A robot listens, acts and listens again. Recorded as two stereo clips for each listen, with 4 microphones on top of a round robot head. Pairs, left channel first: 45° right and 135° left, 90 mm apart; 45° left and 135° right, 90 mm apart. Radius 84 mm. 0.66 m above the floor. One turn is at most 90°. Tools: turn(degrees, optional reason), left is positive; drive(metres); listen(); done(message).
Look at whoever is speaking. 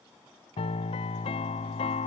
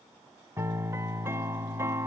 listen()
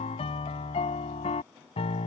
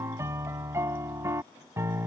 listen()
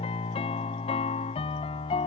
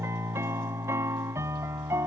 done("I can't make out anyone speaking, only a piano.")